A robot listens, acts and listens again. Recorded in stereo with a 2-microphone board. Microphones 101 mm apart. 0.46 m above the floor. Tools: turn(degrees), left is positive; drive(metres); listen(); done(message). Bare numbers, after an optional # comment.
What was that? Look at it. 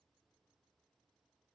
listen()
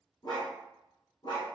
# The dog barking: about 50° left or 130° left.
turn(50)
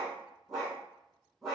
done("Found it: a dog barking, straight ahead.")